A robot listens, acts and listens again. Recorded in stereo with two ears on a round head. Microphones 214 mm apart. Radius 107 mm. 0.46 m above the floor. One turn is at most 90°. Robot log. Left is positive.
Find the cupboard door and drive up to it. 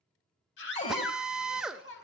note: The cupboard door: about 30° left or 150° left.
cmd yaw +30
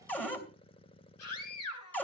cmd fwd 1.0
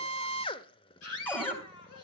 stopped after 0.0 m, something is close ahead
note: The cupboard door is now 10° left.
cmd yaw +10
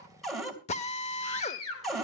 end: Blocked. The cupboard door is further on, straight ahead.